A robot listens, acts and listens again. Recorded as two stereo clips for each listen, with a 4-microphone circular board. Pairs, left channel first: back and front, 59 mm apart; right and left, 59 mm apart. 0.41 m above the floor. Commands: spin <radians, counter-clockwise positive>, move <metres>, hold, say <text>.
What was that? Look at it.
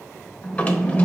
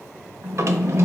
spin 2.01
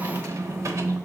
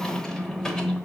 spin -0.26
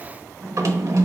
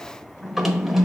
say Found it: a drawer, straight ahead, under 1 m away.